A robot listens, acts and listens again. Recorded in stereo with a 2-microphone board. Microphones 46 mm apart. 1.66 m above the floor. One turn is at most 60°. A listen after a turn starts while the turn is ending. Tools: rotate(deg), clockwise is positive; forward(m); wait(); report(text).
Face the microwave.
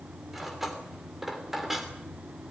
wait()
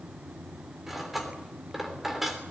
wait()
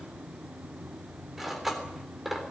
report("I can't make out a microwave to turn to.")